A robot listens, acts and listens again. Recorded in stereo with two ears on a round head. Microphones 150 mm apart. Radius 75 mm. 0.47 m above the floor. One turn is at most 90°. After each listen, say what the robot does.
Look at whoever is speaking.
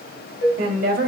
Turn 60° right.
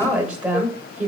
Turn 10° right.
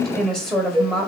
Found it: a woman speaking, straight ahead.